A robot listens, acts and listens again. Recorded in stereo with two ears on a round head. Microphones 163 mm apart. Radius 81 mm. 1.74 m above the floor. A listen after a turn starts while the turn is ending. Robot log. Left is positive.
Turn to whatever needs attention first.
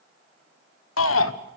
cmd yaw +90
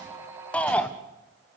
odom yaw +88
end: Found it: a shout, straight ahead, 1 to 2 m away.